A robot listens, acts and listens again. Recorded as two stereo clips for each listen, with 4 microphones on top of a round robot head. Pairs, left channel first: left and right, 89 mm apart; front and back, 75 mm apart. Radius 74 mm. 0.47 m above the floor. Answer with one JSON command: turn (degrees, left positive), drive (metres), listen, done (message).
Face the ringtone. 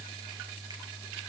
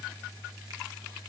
{"listen": true}
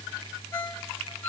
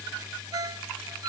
{"turn": 155}
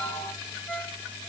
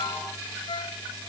{"turn": 15}
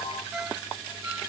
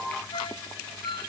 {"done": "Facing the ringtone, 2 to 4 m away."}